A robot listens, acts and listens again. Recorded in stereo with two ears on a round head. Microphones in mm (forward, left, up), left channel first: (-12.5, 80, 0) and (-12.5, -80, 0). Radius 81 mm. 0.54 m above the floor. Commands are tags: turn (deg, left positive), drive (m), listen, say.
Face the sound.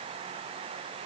<listen/>
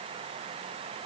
<listen/>
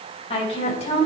<turn deg="40"/>
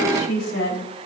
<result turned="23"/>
<turn deg="115"/>
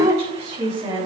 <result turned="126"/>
<turn deg="-15"/>
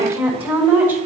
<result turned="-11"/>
<turn deg="-10"/>
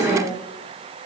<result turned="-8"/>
<say>Found it: a woman speaking, straight ahead.</say>